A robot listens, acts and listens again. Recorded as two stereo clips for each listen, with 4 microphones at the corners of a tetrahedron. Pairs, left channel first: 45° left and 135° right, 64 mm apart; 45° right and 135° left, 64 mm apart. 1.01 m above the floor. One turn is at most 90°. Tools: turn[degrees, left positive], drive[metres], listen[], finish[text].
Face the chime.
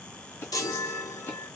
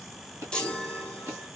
Thought: The chime: 30° left.
Action: turn[30]
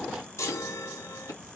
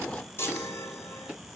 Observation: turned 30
Action: finish[Facing the chime, 1 to 2 m away.]